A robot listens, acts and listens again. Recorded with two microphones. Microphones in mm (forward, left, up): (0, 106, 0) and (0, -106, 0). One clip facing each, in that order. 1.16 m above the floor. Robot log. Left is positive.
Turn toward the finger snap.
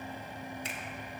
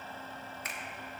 note: The finger snap: about 25° left or 155° left.
cmd yaw +25
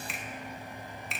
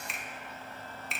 end: Facing the finger snap, 1 to 2 m away.